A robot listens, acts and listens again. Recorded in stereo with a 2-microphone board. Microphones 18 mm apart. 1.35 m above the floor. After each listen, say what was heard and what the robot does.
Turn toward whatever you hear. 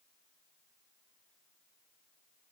Keep listening.
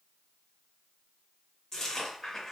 The chewing: about 20° left or 160° left. Turn 20° left.
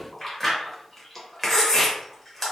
Facing the chewing.